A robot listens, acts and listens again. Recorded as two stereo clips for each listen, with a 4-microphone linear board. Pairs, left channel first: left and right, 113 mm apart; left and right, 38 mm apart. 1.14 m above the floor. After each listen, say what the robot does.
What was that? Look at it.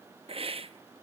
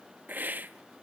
Turn 55° right.
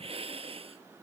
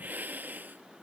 Turn 65° right.
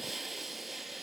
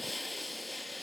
Facing the hiss, under 1 m away.